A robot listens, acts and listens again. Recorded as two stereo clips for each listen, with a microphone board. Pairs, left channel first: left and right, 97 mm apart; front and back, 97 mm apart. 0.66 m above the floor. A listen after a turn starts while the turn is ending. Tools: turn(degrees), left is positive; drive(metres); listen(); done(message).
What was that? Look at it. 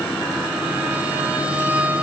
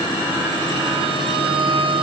turn(degrees=-165)
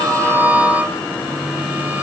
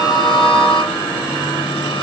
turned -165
listen()
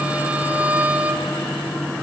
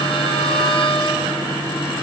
turn(degrees=-15)
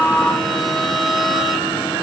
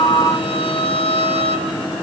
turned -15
done("Facing the violin, 1 to 2 m away.")